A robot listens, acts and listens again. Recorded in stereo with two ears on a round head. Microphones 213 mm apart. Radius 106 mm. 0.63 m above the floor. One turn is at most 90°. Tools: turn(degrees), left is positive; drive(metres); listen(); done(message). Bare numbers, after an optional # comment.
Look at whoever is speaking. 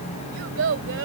# The child speaking: about 55° right or 125° right.
turn(-55)
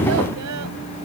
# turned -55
listen()
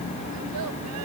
listen()
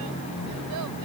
done("I heard a child speaking, but can't make it out now. It was about straight ahead or 70° right.")